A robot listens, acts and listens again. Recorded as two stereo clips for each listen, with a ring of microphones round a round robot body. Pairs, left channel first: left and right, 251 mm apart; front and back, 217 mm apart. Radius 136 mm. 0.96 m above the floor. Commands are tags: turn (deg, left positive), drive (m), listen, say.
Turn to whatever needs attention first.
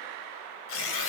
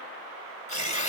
<listen/>
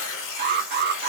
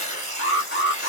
<turn deg="-40"/>
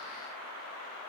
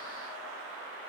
<listen/>
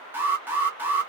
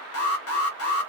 <turn deg="-10"/>
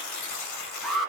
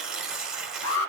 <say>Found it: an alarm, straight ahead.</say>